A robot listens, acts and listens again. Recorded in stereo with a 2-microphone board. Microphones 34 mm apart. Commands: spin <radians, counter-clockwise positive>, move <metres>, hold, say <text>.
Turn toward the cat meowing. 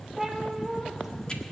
spin -0.52
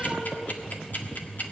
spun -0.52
hold
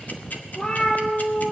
spin 0.52
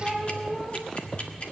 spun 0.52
say Facing the cat meowing, 2 to 4 m away.